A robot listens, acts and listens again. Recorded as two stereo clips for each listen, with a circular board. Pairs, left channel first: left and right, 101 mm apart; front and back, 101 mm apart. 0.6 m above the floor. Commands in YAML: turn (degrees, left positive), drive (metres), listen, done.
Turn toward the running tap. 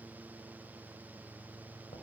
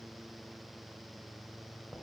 listen: true
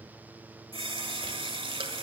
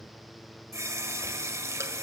turn: -120
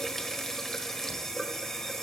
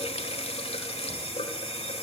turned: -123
done: "Facing the running tap, 1 to 2 m away."